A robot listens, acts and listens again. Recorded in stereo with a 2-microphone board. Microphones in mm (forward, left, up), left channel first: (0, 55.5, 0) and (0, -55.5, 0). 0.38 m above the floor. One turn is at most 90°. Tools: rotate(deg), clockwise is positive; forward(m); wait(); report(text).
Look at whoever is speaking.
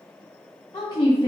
rotate(-40)
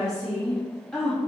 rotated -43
report("Facing the woman speaking, 2 to 4 m away.")